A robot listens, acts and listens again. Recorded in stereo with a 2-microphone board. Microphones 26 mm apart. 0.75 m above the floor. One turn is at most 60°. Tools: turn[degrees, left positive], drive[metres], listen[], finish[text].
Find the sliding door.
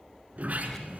Thought: The sliding door: about 65° right or 115° right.
Action: turn[-60]
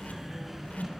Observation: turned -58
Action: finish[Facing the sliding door, 2 to 4 m away.]